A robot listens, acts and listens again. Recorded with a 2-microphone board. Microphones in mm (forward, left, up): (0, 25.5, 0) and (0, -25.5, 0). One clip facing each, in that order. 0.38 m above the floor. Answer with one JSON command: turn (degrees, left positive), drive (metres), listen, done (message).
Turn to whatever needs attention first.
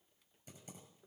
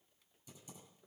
{"listen": true}
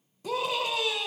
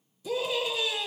{"turn": 60}
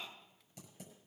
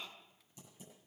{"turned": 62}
{"listen": true}
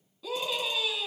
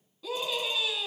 {"done": "Facing the scream."}